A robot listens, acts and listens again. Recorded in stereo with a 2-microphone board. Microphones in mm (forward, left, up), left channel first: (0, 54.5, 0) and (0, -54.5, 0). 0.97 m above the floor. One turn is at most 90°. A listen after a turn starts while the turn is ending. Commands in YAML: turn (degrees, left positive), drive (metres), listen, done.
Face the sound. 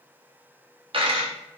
turn: -55
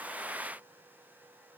listen: true
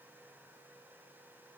done: "I heard a dropped coin, but can't make it out now. It was about straight ahead or 70° right."